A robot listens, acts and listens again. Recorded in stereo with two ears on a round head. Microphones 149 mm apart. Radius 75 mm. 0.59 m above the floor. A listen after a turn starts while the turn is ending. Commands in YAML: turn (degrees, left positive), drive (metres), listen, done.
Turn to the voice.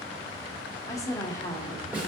turn: 20
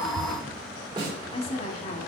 turn: 135
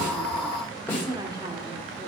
turn: -25
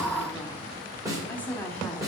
turn: 10
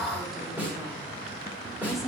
done: "Facing the woman speaking."